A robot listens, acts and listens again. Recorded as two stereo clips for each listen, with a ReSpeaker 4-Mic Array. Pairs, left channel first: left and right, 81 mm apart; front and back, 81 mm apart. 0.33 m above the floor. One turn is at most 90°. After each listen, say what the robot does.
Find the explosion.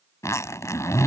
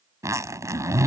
Keep listening.
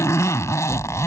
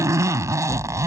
Turn 90° right.
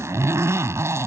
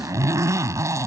Turn 30° right.
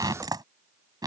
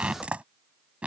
I heard an explosion from this way, but can't make it out now.